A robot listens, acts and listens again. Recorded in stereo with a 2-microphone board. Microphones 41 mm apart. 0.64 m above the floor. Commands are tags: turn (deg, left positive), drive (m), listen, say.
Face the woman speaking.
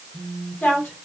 <turn deg="65"/>
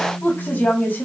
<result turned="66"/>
<turn deg="45"/>
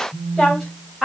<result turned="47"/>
<say>Facing the woman speaking, 2 to 4 m away.</say>